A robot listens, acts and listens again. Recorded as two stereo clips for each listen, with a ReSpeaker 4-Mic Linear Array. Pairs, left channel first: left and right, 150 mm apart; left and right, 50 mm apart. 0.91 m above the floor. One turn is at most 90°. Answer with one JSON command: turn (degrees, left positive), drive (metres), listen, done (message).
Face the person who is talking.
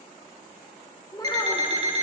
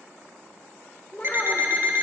{"turn": 25}
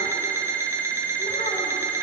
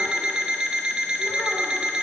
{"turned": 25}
{"listen": true}
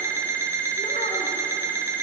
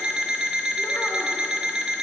{"listen": true}
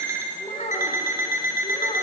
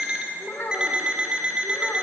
{"turn": 90}
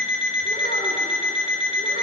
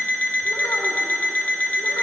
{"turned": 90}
{"turn": 40}
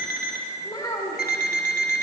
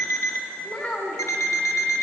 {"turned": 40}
{"turn": 25}
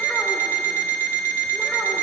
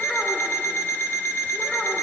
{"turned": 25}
{"listen": true}
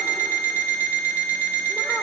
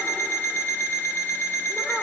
{"listen": true}
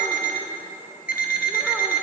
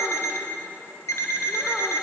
{"done": "Facing where the child speaking came from. I can't hear it now."}